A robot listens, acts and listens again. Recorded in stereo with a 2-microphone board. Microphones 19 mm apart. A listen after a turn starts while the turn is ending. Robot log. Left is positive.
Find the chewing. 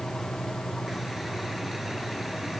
cmd idle
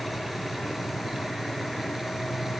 cmd idle
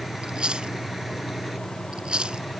note: The chewing: about 65° right or 115° right.
cmd yaw -65
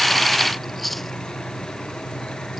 end: Facing the chewing.